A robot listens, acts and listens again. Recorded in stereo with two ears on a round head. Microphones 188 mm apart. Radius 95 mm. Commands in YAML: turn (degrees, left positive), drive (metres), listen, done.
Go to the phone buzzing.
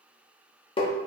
listen: true
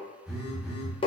turn: 30
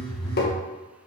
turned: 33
turn: 150
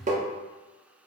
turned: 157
listen: true
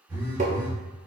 turn: -10
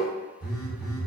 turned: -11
drive: 1.0
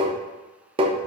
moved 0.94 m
listen: true
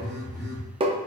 drive: 1.0
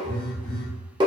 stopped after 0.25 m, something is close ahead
done: "Arrived at the phone buzzing, straight ahead."